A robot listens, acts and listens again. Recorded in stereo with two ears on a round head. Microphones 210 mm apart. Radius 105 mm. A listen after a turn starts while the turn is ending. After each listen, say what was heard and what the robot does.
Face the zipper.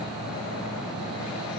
Keep listening.
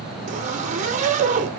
The zipper: about 30° right or 150° right. Turn 30° right.
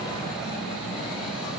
Keep listening.
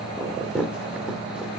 Found it: a zipper, straight ahead, 1 to 2 m away.